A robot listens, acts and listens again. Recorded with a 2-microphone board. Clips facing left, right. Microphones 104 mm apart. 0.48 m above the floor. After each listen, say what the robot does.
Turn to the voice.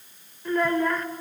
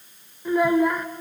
Turn 30° right.
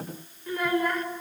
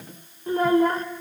Turn 140° right.
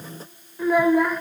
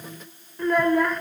Found it: a child speaking, straight ahead.